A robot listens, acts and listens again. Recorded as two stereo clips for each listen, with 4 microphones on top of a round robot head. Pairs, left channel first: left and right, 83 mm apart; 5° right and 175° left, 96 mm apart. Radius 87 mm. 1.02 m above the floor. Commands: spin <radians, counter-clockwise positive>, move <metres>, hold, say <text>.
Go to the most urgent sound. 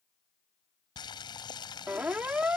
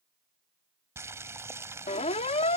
spin -0.17
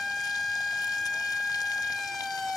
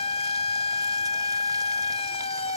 move 1.0
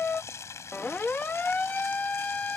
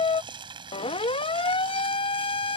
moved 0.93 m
spin 0.26
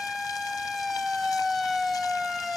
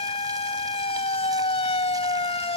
move 1.0
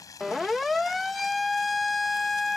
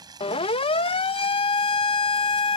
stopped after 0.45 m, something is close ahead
say Arrived at the siren, straight ahead.